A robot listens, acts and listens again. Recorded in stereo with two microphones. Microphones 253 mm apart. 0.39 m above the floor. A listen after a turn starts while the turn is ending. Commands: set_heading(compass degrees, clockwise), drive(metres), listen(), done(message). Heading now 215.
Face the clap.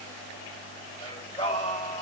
listen()
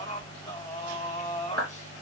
set_heading(275)
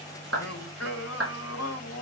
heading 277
set_heading(332)
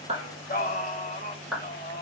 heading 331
done("Facing the clap.")